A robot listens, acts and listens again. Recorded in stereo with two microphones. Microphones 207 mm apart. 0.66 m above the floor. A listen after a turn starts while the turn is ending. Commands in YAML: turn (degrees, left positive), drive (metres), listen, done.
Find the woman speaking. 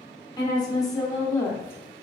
turn: 30
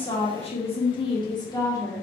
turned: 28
turn: 30
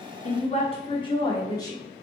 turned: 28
turn: 15
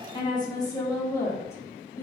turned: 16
turn: 30
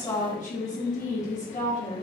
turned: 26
turn: 145
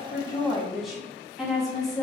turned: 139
done: "Facing the woman speaking, 1 to 2 m away."